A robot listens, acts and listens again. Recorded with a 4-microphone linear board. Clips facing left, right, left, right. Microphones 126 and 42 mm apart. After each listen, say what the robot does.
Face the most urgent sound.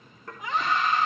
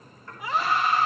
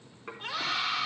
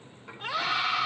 Turn 30° right.
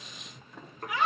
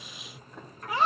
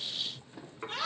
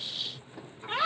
Turn 145° right.
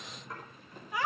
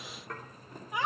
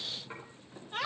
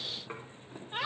Turn 20° right.
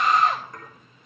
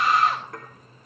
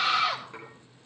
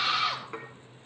Found it: a scream, straight ahead.